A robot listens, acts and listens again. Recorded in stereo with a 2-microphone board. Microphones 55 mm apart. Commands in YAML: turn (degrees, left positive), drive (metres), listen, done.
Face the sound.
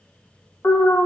turn: 40
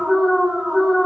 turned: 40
done: "Facing the alarm, 2 to 4 m away."